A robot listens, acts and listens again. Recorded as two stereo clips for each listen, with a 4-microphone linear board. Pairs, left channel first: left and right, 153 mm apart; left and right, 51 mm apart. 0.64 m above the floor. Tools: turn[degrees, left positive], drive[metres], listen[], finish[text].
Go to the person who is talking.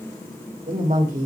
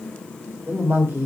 Thought: The woman speaking: about 60° right or 120° right.
Action: turn[-60]
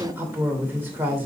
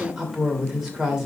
Thought: So it is at 15° right.
Action: turn[-15]
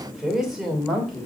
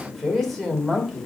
Action: drive[1.0]
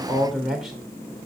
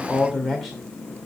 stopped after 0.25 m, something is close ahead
Action: finish[Blocked. The woman speaking is further on, straight ahead.]